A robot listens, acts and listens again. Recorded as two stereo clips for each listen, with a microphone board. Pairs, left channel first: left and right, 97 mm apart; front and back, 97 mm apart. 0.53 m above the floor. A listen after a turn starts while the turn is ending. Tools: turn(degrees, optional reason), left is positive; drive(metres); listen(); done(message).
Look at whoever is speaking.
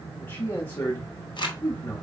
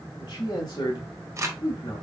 turn(degrees=25, reason="The man speaking: 25° left.")
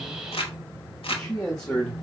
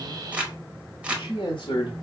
turn(degrees=10, reason="The man speaking is now 10° left.")
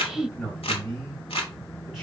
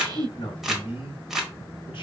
done("Found it: a man speaking, straight ahead, 1 to 2 m away.")